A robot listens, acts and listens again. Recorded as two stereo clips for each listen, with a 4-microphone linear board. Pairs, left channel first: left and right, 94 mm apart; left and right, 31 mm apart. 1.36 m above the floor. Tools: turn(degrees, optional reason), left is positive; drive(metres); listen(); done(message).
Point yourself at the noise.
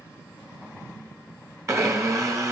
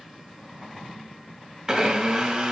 turn(degrees=-30, reason="The blender: about 30° right or 150° right.")
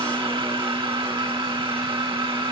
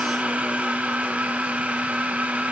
turn(degrees=-120, reason="So it is at 120° right.")
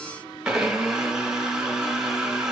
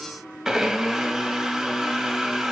turn(degrees=-10, reason="The blender is now 10° right.")
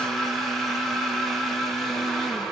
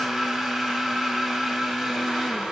done("Facing the blender.")